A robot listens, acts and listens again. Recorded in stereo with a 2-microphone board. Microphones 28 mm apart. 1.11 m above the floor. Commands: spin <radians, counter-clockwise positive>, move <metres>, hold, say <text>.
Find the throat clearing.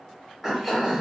spin -0.52
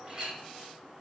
hold
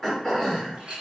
spin 0.26
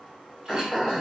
say Facing the throat clearing.